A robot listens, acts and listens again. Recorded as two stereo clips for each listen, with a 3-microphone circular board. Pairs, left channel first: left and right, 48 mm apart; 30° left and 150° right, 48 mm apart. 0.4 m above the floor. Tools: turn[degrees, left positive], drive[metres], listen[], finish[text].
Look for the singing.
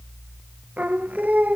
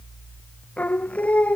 Thought: The singing: 30° right.
Action: turn[-30]
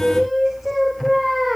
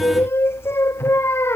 Action: finish[Facing the singing.]